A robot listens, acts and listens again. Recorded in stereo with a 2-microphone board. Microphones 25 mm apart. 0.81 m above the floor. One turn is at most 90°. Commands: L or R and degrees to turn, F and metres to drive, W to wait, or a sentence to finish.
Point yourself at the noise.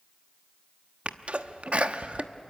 R50
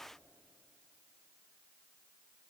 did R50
W
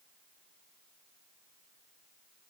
I heard a sneeze, but can't make it out now. It was about straight ahead or 80° right.